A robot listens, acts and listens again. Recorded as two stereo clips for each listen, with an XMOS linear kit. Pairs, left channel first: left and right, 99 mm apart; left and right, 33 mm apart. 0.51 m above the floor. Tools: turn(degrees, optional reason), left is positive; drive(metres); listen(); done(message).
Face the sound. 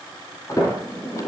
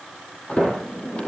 turn(degrees=35, reason="The sliding door: about 35° left or 145° left.")
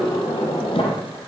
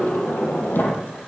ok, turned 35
turn(degrees=105, reason="So it is at 105° left.")
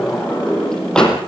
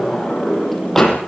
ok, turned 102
done("Found it: a sliding door, straight ahead.")